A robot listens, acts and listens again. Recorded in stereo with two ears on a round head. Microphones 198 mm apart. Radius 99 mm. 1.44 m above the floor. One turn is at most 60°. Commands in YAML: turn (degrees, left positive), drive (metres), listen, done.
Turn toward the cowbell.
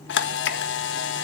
listen: true
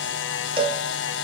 turn: -25
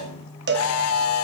turn: -60
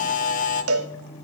turn: -60
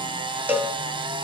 turn: -10
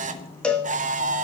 done: "Found it: a cowbell, straight ahead, 1 to 2 m away."